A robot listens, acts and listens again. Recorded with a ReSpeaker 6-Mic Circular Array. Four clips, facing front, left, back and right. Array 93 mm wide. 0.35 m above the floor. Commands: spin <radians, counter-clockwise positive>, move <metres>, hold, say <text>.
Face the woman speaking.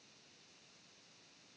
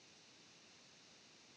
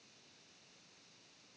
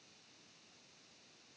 hold
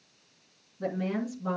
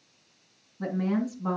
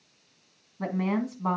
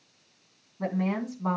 spin -2.71
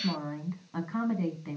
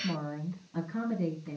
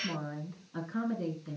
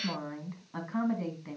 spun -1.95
spin -0.52
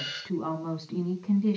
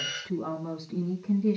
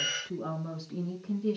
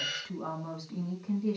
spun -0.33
say Found it: a woman speaking, straight ahead, 2 to 4 m away.